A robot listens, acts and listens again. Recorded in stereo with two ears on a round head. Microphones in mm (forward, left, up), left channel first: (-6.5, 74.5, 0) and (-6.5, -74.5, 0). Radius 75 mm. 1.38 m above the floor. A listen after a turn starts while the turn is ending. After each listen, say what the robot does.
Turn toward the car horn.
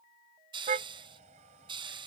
Turn 45° right.
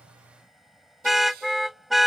Found it: a car horn, straight ahead.